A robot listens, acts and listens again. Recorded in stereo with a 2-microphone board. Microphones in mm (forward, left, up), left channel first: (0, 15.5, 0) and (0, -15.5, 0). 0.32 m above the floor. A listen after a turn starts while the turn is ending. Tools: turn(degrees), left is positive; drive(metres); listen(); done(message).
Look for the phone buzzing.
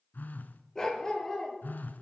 turn(degrees=90)
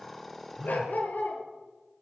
turn(degrees=-10)
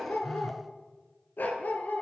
done("Found it: a phone buzzing, straight ahead.")